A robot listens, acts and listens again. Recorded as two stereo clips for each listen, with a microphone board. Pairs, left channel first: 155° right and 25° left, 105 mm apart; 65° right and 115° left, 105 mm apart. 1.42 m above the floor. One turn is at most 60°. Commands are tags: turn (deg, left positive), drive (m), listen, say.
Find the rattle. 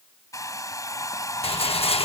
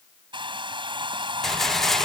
<turn deg="-60"/>
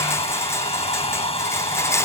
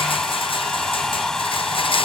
<turn deg="-60"/>
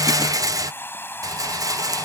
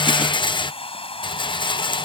<turn deg="-30"/>
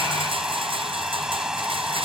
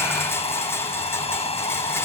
<say>Found it: a rattle, straight ahead.</say>